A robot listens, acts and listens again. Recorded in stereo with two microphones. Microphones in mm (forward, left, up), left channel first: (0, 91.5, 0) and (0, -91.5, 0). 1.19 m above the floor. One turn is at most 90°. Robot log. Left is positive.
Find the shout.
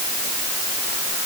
cmd idle
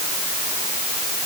cmd idle
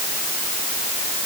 end: I can't make out a shout.